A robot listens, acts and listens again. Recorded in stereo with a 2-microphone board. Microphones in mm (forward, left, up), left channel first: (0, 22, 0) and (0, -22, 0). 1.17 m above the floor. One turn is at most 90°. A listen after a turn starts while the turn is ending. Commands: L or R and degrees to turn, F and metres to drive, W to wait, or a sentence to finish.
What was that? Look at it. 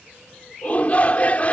L35
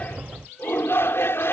L90
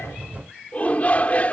L35
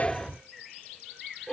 L15
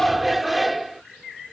Facing the shout.